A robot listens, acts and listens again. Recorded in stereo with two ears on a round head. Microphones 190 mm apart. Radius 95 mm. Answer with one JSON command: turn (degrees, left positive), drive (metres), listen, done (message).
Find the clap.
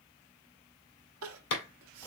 {"turn": 65}
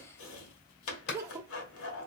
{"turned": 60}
{"turn": 50}
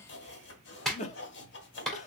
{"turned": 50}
{"done": "Found it: a clap, straight ahead, 1 to 2 m away."}